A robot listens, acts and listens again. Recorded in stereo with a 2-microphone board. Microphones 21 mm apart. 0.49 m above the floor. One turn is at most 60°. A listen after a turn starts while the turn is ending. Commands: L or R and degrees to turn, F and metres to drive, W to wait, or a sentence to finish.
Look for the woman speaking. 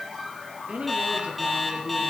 R60
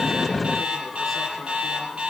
R30
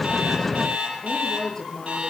L20
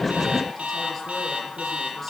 W
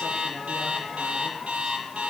W
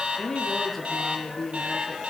Found it: a woman speaking, straight ahead.